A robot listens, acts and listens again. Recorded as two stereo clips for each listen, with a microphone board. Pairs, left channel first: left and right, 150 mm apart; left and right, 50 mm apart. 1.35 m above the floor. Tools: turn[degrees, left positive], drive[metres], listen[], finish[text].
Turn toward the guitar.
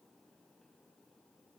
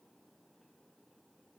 Action: listen[]
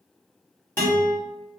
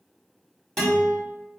Action: turn[30]
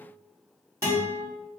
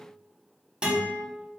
Thought: So it is at 20° right.
Action: turn[-20]
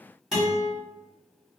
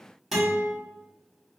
Action: finish[Facing the guitar.]